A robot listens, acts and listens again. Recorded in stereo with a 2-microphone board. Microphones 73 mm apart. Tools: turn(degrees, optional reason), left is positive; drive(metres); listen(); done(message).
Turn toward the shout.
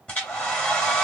listen()
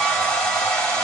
listen()
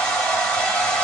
done("I can't make out a shout to turn to.")